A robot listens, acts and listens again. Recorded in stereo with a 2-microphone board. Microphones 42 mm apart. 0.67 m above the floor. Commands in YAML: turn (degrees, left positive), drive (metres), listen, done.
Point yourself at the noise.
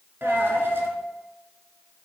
turn: -70
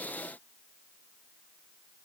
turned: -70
listen: true
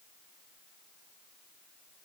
done: "I heard a dropped coin, but can't make it out now. It was about straight ahead or 40° right."